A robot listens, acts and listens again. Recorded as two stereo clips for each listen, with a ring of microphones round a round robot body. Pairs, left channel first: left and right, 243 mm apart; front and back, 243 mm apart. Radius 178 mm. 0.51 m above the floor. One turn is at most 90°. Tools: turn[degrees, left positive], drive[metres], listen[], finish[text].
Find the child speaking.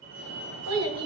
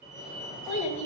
Thought: The child speaking: 100° right.
Action: turn[-90]
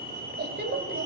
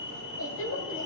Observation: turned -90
Thought: The child speaking is now 45° right.
Action: turn[-45]
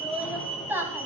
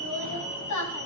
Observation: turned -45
Thought: The child speaking is now 10° right.
Action: turn[-10]
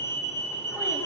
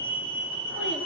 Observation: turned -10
Action: listen[]
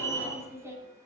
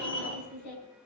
Thought: The child speaking is now 10° right.
Action: turn[-10]
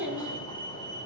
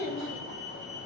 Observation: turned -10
Action: finish[Found it: a child speaking, straight ahead, over 4 m away.]